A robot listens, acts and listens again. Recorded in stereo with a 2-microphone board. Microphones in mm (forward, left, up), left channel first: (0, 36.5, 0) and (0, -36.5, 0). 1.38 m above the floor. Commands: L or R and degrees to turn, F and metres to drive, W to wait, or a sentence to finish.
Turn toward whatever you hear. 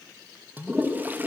R25
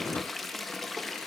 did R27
Found it: a toilet flushing, straight ahead.